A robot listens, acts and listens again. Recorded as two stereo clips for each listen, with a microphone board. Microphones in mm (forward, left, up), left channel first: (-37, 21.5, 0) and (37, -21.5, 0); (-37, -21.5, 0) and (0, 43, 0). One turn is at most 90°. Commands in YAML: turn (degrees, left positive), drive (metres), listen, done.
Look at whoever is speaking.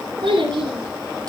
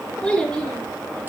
turn: -45
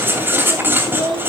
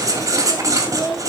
turn: -30
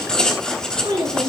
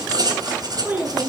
turn: -10
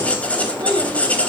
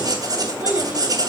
listen: true
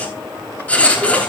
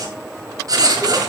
listen: true
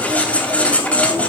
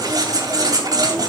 done: "I heard a child speaking from this way, but can't make it out now."